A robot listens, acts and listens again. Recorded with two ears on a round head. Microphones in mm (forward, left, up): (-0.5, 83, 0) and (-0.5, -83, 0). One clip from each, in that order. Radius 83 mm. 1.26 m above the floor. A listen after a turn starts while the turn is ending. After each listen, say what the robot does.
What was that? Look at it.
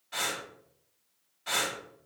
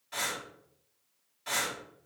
Turn 15° right.
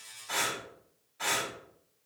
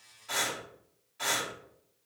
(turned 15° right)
Turn 150° right.
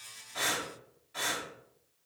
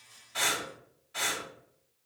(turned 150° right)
Turn 20° right.
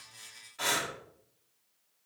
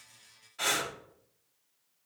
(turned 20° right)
Facing the breathing, 2 to 4 m away.